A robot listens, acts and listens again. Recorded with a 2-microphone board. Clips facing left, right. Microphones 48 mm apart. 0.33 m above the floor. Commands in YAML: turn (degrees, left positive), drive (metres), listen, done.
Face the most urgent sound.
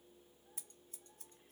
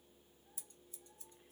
listen: true
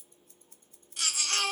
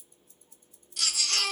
turn: 30
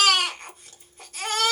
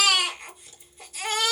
turn: 120
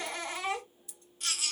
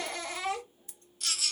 turn: 35
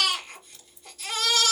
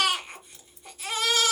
turn: -20
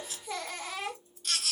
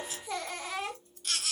done: "Facing the baby crying."